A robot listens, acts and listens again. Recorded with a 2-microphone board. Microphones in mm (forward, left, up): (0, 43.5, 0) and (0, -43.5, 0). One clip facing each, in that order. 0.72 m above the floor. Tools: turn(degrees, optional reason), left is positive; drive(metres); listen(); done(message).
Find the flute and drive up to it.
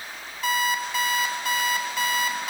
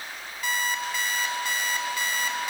listen()
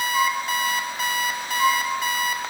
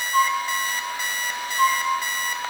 turn(degrees=-50, reason="The flute: about 50° right or 130° right.")
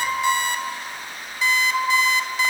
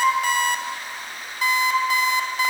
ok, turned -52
drive(metres=1.0)
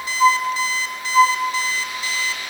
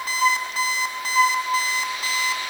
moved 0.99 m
turn(degrees=10, reason="The flute is now 10° left.")
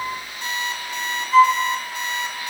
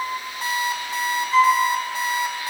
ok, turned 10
drive(metres=1.0)
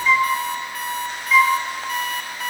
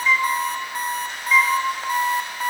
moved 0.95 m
drive(metres=1.0)
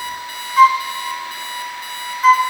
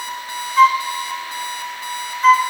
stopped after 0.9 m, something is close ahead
done("I am next to the flute.")